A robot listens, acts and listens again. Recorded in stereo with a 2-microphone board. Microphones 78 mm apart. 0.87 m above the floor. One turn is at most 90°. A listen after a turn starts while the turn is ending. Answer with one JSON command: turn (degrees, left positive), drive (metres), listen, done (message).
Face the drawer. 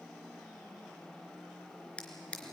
{"turn": 30}
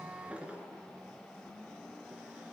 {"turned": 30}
{"turn": -15}
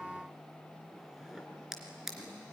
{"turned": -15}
{"done": "Found it: a drawer, straight ahead, 2 to 4 m away."}